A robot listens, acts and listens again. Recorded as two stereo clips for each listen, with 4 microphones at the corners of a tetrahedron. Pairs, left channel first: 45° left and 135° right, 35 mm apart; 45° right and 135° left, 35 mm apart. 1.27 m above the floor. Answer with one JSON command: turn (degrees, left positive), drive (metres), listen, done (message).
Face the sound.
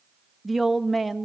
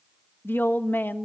{"turn": -50}
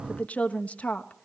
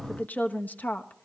{"done": "Facing the woman speaking, 1 to 2 m away."}